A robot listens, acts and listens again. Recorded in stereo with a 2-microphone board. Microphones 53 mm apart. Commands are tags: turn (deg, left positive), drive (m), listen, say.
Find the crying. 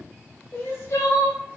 <turn deg="60"/>
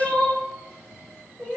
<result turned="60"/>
<turn deg="15"/>
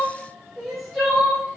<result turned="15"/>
<say>Facing the crying, under 1 m away.</say>